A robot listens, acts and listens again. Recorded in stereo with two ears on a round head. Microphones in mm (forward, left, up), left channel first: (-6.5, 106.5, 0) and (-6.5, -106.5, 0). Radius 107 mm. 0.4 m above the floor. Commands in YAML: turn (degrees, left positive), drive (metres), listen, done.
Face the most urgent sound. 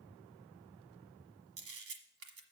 listen: true
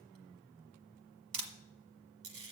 listen: true
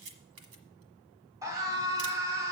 turn: -30
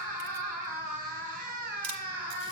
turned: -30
turn: -135
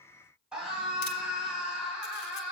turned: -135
done: "Found it: a scream, straight ahead."